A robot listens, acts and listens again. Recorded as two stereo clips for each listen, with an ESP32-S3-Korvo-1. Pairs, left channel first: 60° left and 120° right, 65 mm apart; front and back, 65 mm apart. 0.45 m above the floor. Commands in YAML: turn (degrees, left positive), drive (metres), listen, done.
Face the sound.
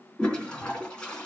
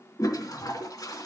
turn: -15
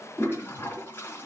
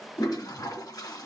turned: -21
done: "Facing the toilet flushing."